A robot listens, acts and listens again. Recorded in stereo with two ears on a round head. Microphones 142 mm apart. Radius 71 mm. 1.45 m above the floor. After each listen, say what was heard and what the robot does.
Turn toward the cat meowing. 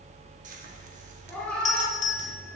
Turn 30° left.
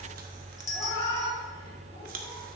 So it is at 155° left. Turn 155° left.
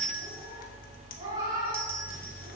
The cat meowing is now 25° right. Turn 25° right.
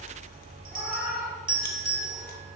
Facing the cat meowing.